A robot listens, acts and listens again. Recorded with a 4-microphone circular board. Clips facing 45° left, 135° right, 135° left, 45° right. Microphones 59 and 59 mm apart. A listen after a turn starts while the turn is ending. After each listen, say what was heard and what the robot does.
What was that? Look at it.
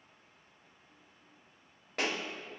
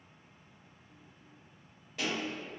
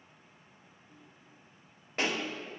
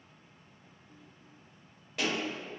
The pop: 80° left. Turn 80° left.
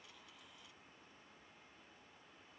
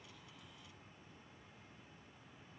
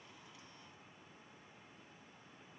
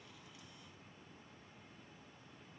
Facing where the pop came from. I can't hear it now.